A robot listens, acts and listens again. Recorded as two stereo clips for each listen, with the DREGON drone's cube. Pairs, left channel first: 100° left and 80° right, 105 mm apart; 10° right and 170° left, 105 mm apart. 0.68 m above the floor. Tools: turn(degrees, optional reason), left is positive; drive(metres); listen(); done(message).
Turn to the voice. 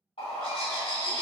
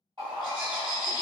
listen()
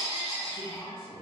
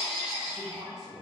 turn(degrees=80, reason="The man speaking: 80° left.")
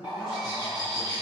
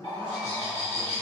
listen()
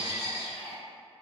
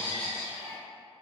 listen()
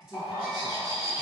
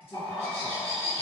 done("Facing the man speaking.")